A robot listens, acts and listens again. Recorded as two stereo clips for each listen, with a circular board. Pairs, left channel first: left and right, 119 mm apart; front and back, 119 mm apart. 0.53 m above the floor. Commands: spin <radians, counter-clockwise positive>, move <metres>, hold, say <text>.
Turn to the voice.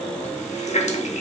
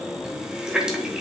hold
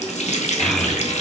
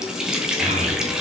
spin 3.05
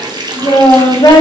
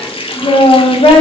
spin 0.70
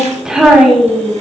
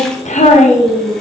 say Facing the child speaking, 1 to 2 m away.